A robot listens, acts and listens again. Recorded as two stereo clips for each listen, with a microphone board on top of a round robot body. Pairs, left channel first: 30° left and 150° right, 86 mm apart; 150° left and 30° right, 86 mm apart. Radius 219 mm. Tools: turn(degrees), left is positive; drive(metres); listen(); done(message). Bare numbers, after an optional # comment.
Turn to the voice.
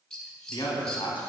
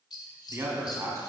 # The man speaking: 20° left.
turn(20)
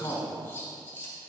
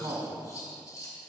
done("Found it: a man speaking, straight ahead, 2 to 4 m away.")